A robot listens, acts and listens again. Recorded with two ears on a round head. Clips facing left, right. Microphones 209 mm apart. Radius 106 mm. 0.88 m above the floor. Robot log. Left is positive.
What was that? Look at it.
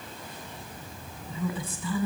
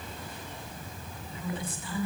cmd yaw +90
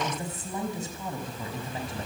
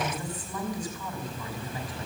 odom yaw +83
note: So it is at 25° left.
cmd yaw +25
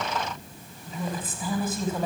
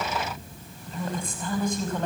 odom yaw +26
end: Found it: a woman speaking, straight ahead, over 4 m away.